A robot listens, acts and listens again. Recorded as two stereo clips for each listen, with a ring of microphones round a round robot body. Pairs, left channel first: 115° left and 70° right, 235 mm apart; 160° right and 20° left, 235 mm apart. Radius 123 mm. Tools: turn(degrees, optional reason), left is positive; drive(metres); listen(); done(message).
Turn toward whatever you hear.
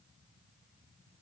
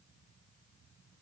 listen()
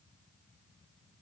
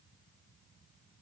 listen()
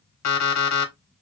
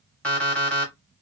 turn(degrees=115, reason="The alarm clock: 115° left.")
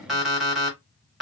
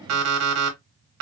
turn(degrees=20, reason="The alarm clock is now 20° left.")
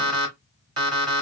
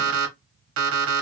done("Found it: an alarm clock, straight ahead, under 1 m away.")